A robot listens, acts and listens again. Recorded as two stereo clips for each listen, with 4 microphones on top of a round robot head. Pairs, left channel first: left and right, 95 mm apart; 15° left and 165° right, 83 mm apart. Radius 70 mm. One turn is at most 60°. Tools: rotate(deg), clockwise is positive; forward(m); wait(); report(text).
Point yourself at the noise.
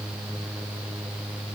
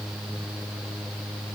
wait()
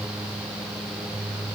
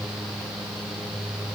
wait()
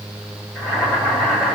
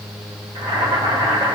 rotate(-60)
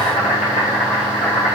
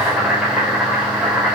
rotate(-60)
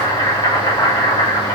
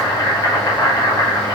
rotate(-55)
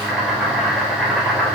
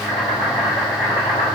report("Facing the boiling.")